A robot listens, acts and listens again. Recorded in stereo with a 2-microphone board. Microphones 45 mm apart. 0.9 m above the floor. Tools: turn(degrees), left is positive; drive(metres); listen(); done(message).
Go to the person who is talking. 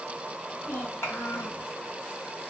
turn(degrees=90)
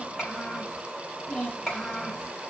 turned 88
drive(metres=1.0)
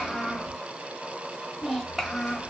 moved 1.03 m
drive(metres=1.0)
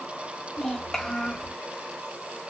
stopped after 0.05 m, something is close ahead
done("I am next to the child speaking.")